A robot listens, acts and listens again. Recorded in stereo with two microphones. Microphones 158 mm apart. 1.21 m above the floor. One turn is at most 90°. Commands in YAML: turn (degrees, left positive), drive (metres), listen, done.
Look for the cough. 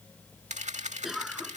turn: 30
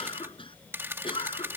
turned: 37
turn: 90
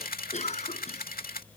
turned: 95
turn: 50
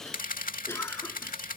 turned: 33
turn: 15
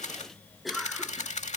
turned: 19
done: "Found it: a cough, straight ahead."